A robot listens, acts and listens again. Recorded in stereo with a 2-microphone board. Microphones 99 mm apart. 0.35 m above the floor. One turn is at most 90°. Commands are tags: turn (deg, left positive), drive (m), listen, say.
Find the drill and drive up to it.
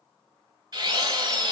<turn deg="-40"/>
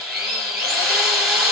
<drive m="1.0"/>
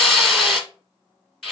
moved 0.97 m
<drive m="1.0"/>
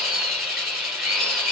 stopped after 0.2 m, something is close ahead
<say>I am next to the drill.</say>